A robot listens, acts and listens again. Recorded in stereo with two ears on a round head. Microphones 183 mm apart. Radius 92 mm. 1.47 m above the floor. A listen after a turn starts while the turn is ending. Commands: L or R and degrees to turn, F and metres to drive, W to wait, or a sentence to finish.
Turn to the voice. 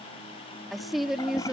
R30
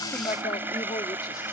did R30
W
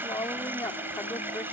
L15
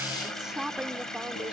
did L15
Facing the woman speaking.